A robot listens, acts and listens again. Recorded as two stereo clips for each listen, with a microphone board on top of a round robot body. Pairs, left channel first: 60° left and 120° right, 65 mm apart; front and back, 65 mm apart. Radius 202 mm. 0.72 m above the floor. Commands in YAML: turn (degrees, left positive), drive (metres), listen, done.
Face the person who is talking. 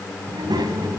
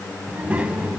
turn: -105
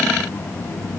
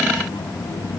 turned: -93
done: "Found it: a child speaking, straight ahead, 2 to 4 m away."